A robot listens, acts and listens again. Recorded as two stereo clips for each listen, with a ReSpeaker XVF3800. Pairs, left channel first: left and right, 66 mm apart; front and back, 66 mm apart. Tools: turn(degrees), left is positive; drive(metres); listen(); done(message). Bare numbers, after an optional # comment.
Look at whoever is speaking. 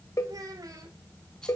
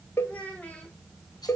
# The child speaking: 70° right.
turn(-70)
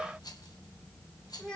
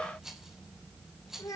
# The child speaking is now 15° left.
turn(15)
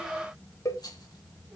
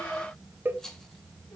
listen()
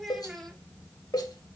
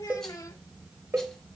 done("Found it: a child speaking, straight ahead.")